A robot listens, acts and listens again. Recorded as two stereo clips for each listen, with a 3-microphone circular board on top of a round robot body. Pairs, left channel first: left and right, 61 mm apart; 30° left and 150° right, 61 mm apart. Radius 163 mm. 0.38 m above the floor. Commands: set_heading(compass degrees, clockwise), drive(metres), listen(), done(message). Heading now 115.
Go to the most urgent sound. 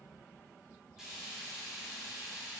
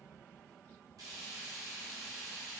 listen()
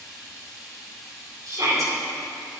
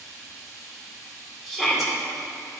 set_heading(180)
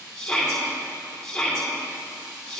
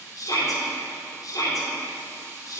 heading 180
set_heading(170)
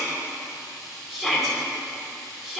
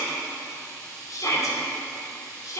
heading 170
drive(1.0)
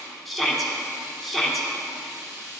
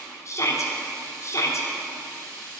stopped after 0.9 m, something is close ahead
done("I am next to the shout.")